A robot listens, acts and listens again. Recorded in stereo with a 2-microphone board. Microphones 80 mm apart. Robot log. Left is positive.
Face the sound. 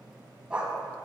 cmd yaw -30
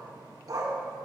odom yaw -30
note: So it is at 130° right.
cmd yaw -130
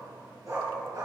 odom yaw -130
note: The dog barking is now 40° right.
cmd yaw -40
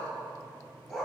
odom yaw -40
end: Facing the dog barking.